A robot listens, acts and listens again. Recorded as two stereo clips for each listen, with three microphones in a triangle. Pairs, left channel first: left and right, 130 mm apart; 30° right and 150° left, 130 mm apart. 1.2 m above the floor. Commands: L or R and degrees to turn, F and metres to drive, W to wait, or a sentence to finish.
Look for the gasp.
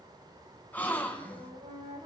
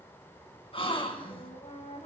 L15
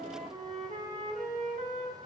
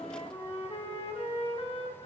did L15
I heard a gasp from this way, but can't make it out now.